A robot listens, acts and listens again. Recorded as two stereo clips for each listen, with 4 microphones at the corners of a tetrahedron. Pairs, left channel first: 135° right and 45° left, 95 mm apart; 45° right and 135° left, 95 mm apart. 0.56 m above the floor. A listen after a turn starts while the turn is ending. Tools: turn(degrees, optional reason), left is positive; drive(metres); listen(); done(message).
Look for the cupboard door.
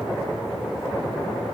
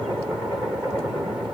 listen()
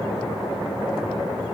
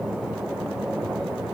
listen()
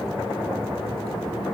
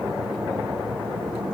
done("I can't make out a cupboard door.")